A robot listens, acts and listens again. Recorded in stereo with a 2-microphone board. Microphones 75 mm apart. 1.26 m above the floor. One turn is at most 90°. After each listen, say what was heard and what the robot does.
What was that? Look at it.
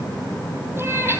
The cat meowing: about 30° right or 150° right. Turn 30° right.
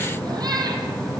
So it is at 120° right. Turn 90° right.
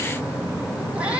The cat meowing is now 15° right. Turn 15° right.
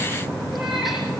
Found it: a cat meowing, straight ahead.